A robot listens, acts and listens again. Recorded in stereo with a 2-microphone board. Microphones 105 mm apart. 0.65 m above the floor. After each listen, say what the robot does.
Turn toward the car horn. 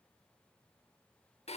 Keep listening.
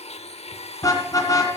Turn 35° left.
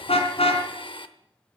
Turn 110° left.
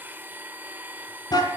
Turn 40° left.
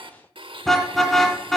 Found it: a car horn, straight ahead, 2 to 4 m away.